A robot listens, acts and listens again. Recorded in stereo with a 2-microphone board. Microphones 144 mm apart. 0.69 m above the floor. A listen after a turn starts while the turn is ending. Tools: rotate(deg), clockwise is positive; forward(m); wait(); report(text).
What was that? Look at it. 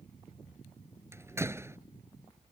rotate(15)
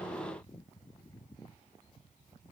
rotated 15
wait()
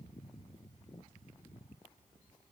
report("I heard a door slam, but can't make it out now. It was about straight ahead or 150° right.")